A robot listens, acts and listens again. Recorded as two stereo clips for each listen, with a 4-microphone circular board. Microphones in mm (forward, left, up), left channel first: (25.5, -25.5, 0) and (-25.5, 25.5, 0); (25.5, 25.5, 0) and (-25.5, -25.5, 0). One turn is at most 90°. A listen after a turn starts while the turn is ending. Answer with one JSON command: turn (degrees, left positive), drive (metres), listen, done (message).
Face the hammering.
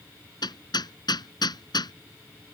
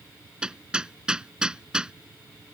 {"turn": -55}
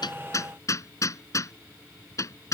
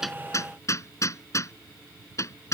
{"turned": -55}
{"done": "Facing the hammering."}